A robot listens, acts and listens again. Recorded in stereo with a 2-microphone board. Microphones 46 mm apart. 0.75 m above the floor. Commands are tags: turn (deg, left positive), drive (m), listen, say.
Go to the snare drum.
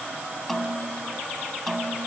<turn deg="30"/>
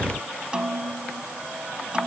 <turn deg="-20"/>
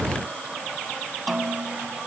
<drive m="1.0"/>
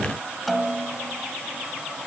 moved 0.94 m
<drive m="1.0"/>
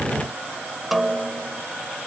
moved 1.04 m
<drive m="1.0"/>
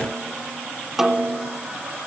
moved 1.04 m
<turn deg="-10"/>
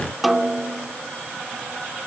<drive m="1.0"/>
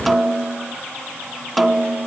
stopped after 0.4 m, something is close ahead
<say>Arrived at the snare drum, straight ahead.</say>